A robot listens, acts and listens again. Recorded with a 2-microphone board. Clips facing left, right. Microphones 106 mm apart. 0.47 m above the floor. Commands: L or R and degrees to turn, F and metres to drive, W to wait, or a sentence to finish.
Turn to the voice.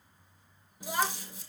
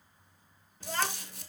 L30
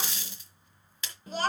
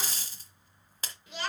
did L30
L140
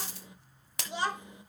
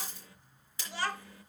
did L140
L20
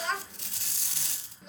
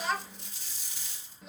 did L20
Facing the child speaking, under 1 m away.